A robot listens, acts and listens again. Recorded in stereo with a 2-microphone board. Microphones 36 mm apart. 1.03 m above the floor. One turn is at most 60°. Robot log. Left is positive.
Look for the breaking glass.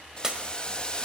note: The breaking glass: about 20° right or 160° right.
cmd yaw -20
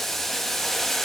cmd idle
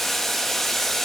end: I heard breaking glass, but can't make it out now. It was about straight ahead or 140° right.